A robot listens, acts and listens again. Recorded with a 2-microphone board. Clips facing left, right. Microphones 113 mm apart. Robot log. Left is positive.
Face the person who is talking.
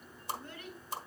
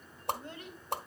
note: The child speaking: about 25° right or 155° right.
cmd yaw -25
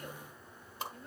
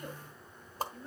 end: Facing the child speaking.